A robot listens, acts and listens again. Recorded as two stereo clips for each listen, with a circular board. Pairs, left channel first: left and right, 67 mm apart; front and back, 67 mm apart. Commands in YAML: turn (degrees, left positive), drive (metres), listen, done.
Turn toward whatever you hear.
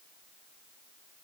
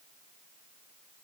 listen: true
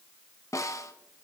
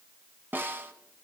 turn: 125
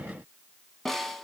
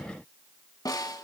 done: "Found it: a snare drum, straight ahead."